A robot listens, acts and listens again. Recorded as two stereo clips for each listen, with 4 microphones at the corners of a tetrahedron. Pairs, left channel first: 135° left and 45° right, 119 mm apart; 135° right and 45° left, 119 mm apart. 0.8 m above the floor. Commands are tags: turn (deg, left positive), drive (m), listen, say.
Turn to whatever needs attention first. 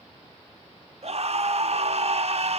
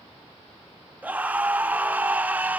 <turn deg="-30"/>
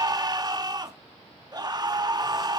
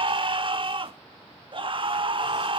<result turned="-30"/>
<say>Found it: a scream, straight ahead, under 1 m away.</say>